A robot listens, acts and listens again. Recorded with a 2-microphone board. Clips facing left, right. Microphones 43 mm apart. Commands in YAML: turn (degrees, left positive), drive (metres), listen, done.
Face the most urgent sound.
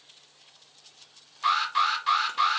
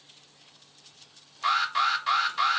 turn: 30
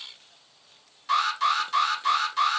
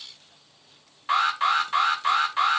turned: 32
turn: -35
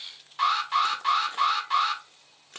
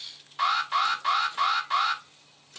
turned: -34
done: "Found it: an alarm, straight ahead."